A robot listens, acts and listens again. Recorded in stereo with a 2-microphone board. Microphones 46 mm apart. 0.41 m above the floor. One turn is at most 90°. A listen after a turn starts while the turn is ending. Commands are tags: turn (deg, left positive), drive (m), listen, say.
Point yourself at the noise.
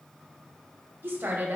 <turn deg="-45"/>
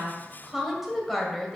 <turn deg="10"/>
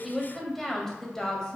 <turn deg="20"/>
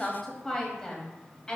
<turn deg="20"/>
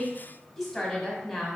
<turn deg="10"/>
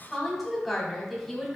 <say>Found it: a woman speaking, straight ahead, 2 to 4 m away.</say>